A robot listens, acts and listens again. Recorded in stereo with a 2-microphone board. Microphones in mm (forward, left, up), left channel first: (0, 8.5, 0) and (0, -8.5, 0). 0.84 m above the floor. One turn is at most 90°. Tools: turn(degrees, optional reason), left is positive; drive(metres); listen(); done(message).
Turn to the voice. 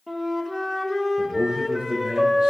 turn(degrees=-55, reason="The man speaking: about 55° right or 125° right.")
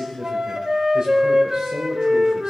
turn(degrees=-70, reason="So it is at 70° right.")
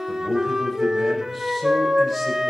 done("Facing the man speaking.")